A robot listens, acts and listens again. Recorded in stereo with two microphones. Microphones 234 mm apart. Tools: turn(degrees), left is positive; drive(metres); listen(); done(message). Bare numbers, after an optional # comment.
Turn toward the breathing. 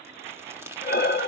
# The breathing: about 45° left or 135° left.
turn(45)
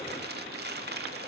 listen()
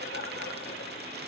listen()
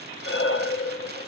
# So it is at 85° left.
turn(85)
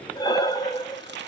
# The breathing is now 20° left.
turn(20)
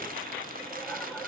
done("Found it: breathing, straight ahead.")